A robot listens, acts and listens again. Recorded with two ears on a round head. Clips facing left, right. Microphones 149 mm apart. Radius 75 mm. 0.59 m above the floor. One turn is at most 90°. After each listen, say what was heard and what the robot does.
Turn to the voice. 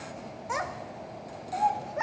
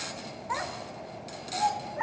The child speaking: about 50° left or 130° left. Turn 50° left.
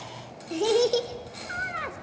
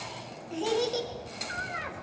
So it is at 75° left. Turn 75° left.
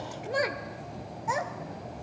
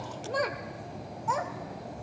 The child speaking is now 15° left. Turn 15° left.
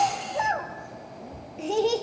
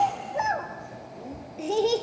Found it: a child speaking, straight ahead, 1 to 2 m away.